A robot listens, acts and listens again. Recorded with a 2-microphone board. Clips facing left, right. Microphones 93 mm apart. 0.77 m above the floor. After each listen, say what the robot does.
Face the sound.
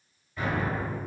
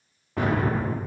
Turn 65° right.
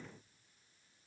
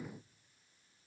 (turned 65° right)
Keep listening.
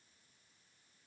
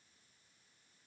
I heard an explosion, but can't make it out now. It was about straight ahead or 50° right.